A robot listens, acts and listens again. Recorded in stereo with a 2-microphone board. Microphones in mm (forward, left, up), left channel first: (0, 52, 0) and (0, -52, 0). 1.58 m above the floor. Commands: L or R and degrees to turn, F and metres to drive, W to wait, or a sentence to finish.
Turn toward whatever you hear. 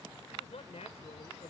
L90
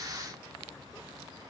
W
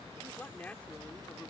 L15
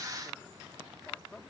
L10
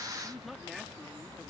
Found it: a man speaking, straight ahead.